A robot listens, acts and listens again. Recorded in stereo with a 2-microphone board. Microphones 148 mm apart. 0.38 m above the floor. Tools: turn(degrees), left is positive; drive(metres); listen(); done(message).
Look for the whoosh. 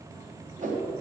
turn(degrees=-60)
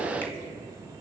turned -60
listen()
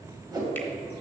turn(degrees=-30)
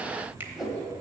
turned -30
done("Found it: a whoosh, straight ahead.")